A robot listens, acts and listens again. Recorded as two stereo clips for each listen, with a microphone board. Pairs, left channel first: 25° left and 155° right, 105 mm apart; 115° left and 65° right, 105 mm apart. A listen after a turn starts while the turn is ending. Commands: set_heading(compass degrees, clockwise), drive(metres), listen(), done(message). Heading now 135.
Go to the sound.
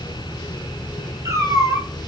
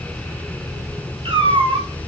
set_heading(230)
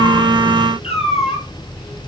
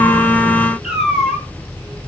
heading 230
set_heading(215)
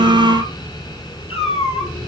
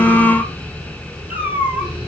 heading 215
drive(1.0)
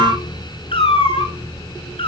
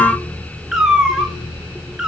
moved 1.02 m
set_heading(200)
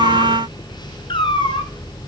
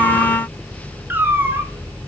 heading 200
drive(1.0)
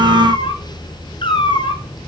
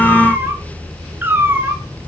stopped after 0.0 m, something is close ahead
done("Arrived at the cat meowing, straight ahead.")